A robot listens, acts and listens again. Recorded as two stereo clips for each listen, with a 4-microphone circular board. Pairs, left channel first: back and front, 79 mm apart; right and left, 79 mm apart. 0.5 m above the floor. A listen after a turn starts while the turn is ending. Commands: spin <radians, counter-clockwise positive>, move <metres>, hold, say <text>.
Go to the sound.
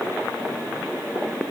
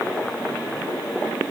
hold
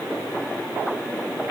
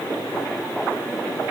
hold
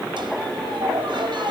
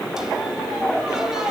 move 1.0
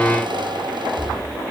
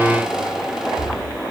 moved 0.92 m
move 1.0
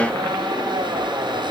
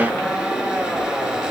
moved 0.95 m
move 1.0
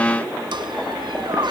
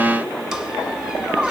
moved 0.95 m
move 1.0
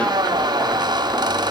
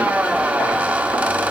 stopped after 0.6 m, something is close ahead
spin 0.26
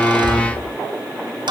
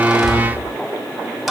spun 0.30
say I am next to the squeak.